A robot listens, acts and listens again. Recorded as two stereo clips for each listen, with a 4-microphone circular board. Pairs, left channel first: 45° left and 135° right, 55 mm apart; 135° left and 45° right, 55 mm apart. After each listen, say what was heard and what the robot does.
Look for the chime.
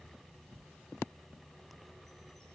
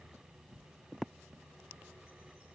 Keep listening.
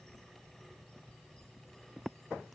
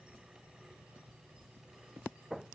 Keep listening.
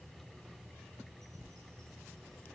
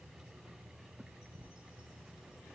I can't make out a chime.